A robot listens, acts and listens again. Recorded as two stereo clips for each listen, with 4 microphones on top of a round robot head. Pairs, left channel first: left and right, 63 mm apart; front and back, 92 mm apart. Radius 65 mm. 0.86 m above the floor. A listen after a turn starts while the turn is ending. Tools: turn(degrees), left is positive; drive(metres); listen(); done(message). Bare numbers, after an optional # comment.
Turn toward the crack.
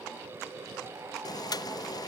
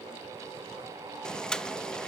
listen()
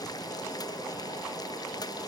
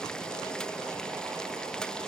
listen()
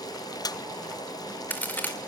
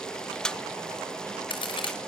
# The crack: 30° left.
turn(30)
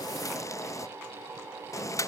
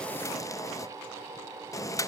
done("Facing where the crack came from. I can't hear it now.")